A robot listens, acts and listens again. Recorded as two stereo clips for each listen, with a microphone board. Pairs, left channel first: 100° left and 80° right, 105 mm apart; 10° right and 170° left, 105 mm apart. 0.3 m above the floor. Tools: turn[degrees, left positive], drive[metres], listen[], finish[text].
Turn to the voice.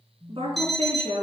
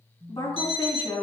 Thought: The woman speaking: 55° right.
Action: turn[-55]
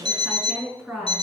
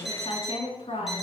Thought: The woman speaking is now 15° left.
Action: turn[15]
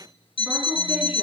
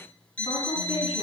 Action: listen[]
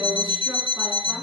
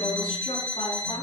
Action: listen[]
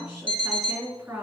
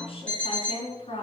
Action: finish[Found it: a woman speaking, straight ahead.]